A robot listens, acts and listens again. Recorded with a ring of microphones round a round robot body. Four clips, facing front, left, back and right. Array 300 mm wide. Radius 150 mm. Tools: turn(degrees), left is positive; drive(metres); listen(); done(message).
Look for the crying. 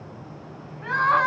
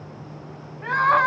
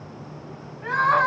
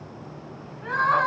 turn(degrees=85)
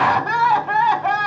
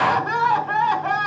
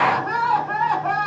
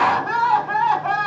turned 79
done("Found it: crying, straight ahead.")